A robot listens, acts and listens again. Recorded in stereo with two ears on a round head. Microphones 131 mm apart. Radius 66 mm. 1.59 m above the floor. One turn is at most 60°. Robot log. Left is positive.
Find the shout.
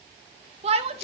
note: The shout: about 45° right or 135° right.
cmd yaw -45
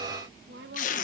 note: So it is at 95° right.
cmd yaw -60
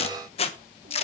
note: Nothing new. It was at 35° right.
cmd yaw -35
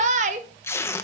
note: The shout is now 50° right.
cmd yaw -50
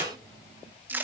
cmd idle
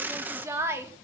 note: The shout is now 20° right.
cmd yaw -20
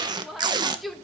end: Facing the shout, 2 to 4 m away.